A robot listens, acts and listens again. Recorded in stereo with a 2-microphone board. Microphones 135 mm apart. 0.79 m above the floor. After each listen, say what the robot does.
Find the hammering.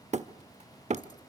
Turn 55° right.
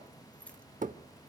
Turn 70° right.
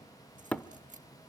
Turn 10° left.
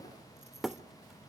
Facing the hammering, under 1 m away.